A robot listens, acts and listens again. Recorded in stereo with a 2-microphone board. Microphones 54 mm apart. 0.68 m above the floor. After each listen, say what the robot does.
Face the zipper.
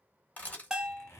Turn 55° left.
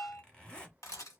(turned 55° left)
Turn 20° left.
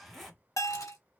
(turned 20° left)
Found it: a zipper, straight ahead.